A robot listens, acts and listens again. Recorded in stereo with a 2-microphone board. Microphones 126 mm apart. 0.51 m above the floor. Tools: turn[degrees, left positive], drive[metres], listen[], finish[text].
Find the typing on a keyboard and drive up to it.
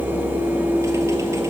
Action: listen[]
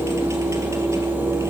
Action: listen[]
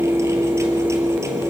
Action: finish[I can't make out typing on a keyboard.]